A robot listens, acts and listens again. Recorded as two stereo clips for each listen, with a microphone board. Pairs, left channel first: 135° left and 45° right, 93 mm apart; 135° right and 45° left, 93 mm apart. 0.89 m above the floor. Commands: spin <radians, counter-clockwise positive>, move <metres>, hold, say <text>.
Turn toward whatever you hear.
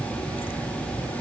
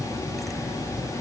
hold
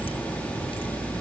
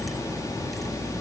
hold
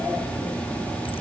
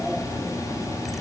say I can't make out anything to turn to.